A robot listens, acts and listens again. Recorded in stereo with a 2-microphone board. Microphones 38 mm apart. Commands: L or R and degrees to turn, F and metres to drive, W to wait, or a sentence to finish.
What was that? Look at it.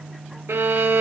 R75
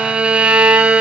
R30
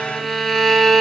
Found it: a violin, straight ahead.